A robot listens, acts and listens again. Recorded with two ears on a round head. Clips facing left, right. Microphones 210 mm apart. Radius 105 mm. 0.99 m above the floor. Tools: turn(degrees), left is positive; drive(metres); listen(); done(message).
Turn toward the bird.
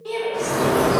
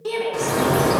turn(degrees=-50)
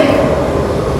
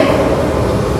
turn(degrees=-80)
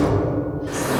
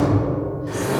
done("Found it: a bird, straight ahead, 1 to 2 m away.")